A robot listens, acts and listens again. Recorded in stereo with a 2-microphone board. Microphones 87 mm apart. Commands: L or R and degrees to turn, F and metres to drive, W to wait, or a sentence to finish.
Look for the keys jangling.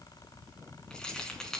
L30
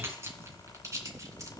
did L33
R40
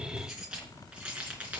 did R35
R15
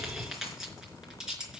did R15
R10
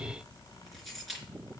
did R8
Found it: keys jangling, straight ahead, 2 to 4 m away.